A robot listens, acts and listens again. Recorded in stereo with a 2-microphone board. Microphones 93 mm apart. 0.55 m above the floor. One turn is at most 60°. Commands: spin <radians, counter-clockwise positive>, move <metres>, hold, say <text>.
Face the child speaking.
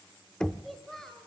spin 0.52
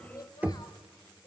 spin 1.05
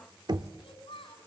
spin 1.05
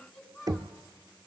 say Facing the child speaking, 2 to 4 m away.